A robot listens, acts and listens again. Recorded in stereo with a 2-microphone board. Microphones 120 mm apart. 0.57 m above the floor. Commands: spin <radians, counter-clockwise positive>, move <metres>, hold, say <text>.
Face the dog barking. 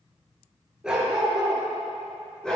spin 0.52
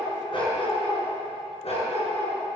spin 2.01
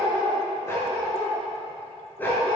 spin 0.26
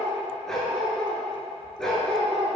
say Found it: a dog barking, straight ahead.